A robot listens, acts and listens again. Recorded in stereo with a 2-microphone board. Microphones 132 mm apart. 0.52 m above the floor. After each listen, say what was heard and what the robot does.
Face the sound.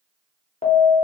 The alarm: about 60° left or 120° left. Turn 60° left.
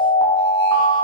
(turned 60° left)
So it is at 40° left. Turn 40° left.
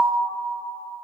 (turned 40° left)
The alarm is now 10° right. Turn 10° right.
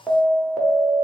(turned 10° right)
Found it: an alarm, straight ahead.